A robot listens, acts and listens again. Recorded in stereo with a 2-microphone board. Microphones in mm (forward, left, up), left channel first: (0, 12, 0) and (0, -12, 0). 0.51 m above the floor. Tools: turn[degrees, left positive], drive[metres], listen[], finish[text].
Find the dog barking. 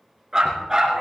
Thought: The dog barking: about 20° right or 160° right.
Action: turn[-20]
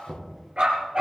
Thought: The dog barking: about 35° right or 145° right.
Action: turn[-35]
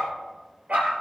Thought: So it is at 115° right.
Action: turn[-115]
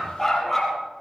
Action: finish[Facing the dog barking, over 4 m away.]